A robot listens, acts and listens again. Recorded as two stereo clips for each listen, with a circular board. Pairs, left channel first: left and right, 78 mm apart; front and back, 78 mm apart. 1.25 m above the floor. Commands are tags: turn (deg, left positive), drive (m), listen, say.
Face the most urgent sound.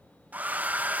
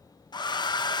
<listen/>
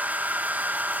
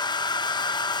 <listen/>
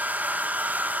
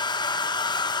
<say>I can't make out anything urgent to turn to.</say>